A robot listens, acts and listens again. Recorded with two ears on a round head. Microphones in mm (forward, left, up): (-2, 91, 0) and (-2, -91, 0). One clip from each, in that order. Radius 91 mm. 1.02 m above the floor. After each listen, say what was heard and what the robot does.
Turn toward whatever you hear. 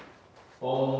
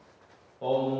The singing: about 55° right or 125° right. Turn 55° right.
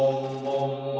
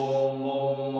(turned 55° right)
So it is at 45° right. Turn 45° right.
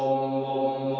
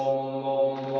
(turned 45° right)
Found it: singing, straight ahead, 2 to 4 m away.